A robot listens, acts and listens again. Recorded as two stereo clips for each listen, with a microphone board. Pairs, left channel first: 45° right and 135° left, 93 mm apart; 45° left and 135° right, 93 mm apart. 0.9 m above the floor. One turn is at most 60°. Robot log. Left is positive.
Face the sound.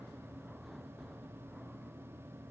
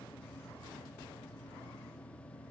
cmd idle
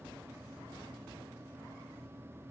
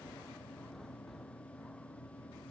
cmd idle
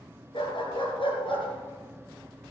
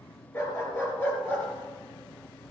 note: The dog barking: 25° right.
cmd yaw -25
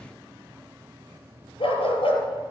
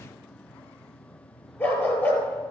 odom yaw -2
note: The dog barking is now 25° right.
cmd yaw -25
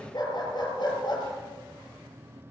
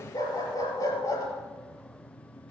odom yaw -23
end: Found it: a dog barking, straight ahead.